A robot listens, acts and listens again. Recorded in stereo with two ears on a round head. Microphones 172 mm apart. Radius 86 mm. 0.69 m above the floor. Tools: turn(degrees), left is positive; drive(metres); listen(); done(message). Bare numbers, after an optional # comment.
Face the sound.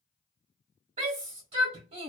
# The shout: about 35° right or 145° right.
turn(-35)
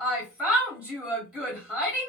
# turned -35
done("Found it: a shout, straight ahead, 1 to 2 m away.")